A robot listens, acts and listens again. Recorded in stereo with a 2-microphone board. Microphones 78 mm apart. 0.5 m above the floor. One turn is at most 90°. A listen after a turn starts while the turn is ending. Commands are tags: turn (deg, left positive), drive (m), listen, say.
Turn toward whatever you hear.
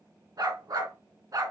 <turn deg="-50"/>
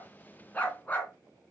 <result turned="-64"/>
<turn deg="25"/>
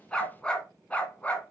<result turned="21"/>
<turn deg="20"/>
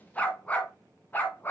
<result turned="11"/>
<turn deg="30"/>
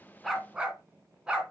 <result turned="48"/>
<turn deg="-10"/>
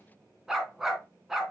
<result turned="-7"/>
<say>Found it: a dog barking, straight ahead.</say>